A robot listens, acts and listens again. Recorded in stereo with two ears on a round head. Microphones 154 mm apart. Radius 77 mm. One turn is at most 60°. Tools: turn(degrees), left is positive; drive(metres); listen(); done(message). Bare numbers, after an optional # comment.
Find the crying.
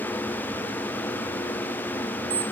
listen()
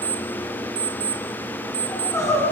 # The crying: about 20° left or 160° left.
turn(20)
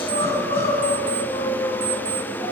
# So it is at 145° left.
turn(60)
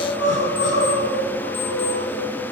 # The crying is now 80° left.
turn(60)
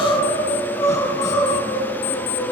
# The crying is now 20° left.
turn(20)
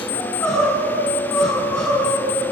done("Found it: crying, straight ahead, over 4 m away.")